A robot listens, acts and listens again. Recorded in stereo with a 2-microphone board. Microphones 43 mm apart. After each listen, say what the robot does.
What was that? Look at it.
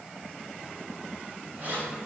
Turn 35° right.
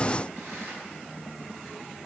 Keep listening.
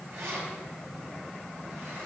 Turn 115° right.
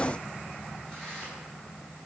Turn 10° left.
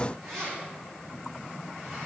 Found it: keys jangling, straight ahead.